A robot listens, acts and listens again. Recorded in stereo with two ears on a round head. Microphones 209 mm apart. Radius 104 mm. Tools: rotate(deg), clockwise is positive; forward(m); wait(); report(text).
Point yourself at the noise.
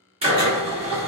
rotate(25)
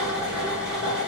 report("Found it: a drill, straight ahead, 1 to 2 m away.")